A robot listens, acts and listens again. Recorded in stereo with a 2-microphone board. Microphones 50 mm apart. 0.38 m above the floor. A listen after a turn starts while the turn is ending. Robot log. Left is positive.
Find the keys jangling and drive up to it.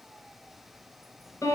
cmd idle
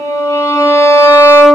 cmd idle
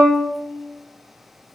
end: I can't make out keys jangling to turn to.